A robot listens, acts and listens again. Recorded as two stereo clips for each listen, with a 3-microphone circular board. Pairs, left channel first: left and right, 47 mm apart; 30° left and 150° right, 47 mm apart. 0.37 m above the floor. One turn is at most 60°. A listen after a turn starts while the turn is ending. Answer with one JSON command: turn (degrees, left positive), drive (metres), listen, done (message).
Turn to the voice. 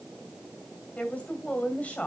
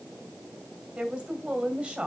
{"turn": 60}
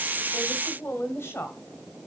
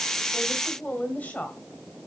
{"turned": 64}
{"turn": 60}
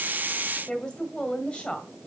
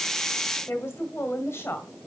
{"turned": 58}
{"turn": 15}
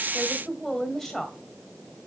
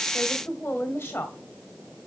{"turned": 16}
{"done": "Facing the woman speaking."}